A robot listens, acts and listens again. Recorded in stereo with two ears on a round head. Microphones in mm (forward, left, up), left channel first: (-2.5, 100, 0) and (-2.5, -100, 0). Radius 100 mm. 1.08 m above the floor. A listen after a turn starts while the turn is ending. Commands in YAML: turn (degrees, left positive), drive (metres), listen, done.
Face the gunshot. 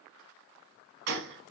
turn: -50
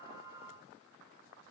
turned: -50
listen: true
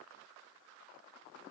done: "I heard a gunshot, but can't make it out now. It was about straight ahead or 80° right."